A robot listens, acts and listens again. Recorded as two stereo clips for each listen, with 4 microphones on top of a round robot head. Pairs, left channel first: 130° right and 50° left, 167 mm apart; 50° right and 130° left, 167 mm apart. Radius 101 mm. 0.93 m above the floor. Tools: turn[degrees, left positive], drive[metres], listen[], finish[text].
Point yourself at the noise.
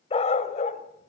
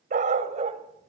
Thought: The dog barking: straight behind.
Action: turn[180]
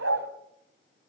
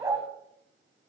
Thought: The dog barking is now 55° left.
Action: turn[55]
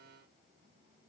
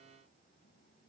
Action: listen[]
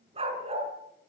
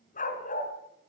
Action: finish[Facing the dog barking.]